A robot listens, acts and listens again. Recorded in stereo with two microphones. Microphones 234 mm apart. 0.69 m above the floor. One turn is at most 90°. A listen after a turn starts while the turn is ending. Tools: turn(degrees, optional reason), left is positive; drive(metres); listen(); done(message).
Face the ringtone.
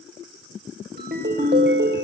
turn(degrees=-45, reason="The ringtone: about 45° right or 135° right.")
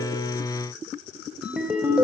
done("Facing the ringtone, 2 to 4 m away.")